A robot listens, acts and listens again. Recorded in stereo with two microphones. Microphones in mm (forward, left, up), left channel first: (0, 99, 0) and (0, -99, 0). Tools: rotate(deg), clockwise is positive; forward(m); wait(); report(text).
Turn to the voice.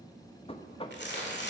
wait()
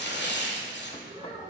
rotate(25)
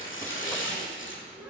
rotate(10)
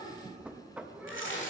rotate(10)
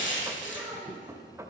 report("Found it: a child speaking, straight ahead, over 4 m away.")